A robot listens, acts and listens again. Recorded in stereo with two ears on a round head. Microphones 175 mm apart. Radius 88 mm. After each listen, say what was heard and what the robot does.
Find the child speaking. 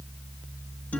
Keep listening.
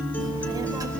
The child speaking: about 20° right or 160° right. Turn 20° right.
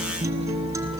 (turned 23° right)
Keep listening.
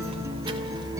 The child speaking: about 30° right or 150° right. Turn 30° right.
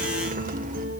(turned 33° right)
Keep listening.
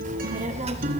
The child speaking: about 30° right or 150° right. Turn 30° right.
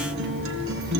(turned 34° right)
Keep listening.
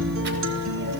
Keep listening.
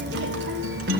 I heard a child speaking, but can't make it out now. It was about straight ahead or 115° right.